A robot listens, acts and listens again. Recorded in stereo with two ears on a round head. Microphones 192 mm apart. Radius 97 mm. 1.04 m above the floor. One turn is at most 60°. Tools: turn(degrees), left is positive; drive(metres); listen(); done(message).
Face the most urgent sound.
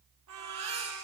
turn(degrees=-30)
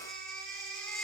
done("Found it: a baby crying, straight ahead, over 4 m away.")